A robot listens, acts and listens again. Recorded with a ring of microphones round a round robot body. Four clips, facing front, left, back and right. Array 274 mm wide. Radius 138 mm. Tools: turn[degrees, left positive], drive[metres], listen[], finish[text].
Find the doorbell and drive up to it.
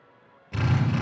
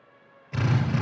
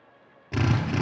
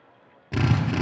Action: listen[]
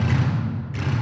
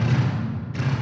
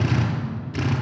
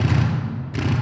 Action: listen[]
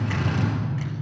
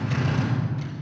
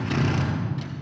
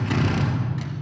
Action: finish[I can't make out a doorbell to turn to.]